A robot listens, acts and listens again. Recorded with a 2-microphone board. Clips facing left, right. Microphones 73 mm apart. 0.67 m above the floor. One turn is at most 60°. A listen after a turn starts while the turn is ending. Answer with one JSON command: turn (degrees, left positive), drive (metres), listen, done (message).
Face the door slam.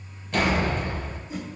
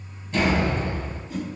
{"turn": 60}
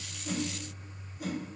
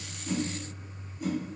{"listen": true}
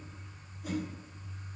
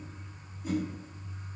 {"done": "I heard a door slam, but can't make it out now. It was about 10° left or 50° left."}